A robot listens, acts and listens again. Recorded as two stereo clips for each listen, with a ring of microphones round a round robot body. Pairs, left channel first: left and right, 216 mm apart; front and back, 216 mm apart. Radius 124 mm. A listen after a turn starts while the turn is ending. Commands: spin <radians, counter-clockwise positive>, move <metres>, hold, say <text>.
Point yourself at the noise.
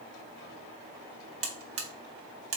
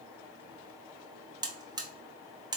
spin -1.92
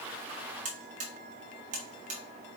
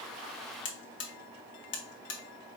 spin -0.52
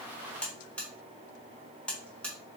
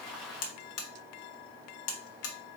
say Facing the buzzer.